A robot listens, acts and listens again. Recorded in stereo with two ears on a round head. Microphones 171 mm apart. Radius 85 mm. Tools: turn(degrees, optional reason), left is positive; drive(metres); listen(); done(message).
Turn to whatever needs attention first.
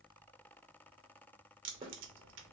listen()
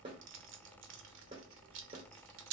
listen()
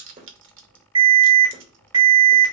turn(degrees=-20, reason="The alarm: about 20° right or 160° right.")
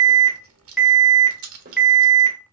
done("Found it: an alarm, straight ahead, 2 to 4 m away.")